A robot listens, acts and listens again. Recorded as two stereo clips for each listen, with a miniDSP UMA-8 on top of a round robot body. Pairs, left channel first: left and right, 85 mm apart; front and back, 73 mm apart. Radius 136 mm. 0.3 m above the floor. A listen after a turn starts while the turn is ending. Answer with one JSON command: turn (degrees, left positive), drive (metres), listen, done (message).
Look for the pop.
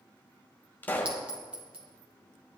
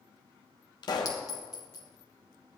{"turn": 20}
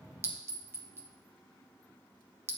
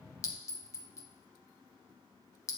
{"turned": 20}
{"done": "I heard a pop from this way, but can't make it out now."}